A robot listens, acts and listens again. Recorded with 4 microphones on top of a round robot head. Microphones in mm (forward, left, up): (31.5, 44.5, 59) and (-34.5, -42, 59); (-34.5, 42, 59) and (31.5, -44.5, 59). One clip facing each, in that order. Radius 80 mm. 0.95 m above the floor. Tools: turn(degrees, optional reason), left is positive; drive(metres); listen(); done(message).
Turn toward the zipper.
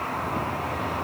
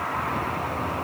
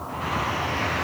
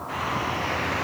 listen()
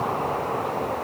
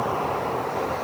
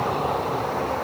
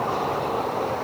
listen()
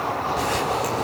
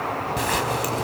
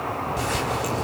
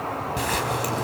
turn(degrees=-90, reason="The zipper: 90° right.")
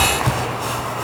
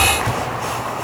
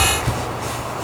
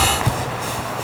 turn(degrees=-15, reason="The zipper is now 15° right.")
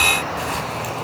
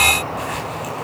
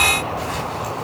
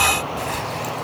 listen()
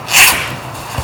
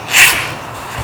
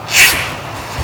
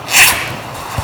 turn(degrees=-10, reason="The zipper is now 10° right.")
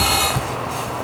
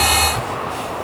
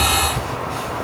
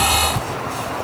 done("Found it: a zipper, straight ahead.")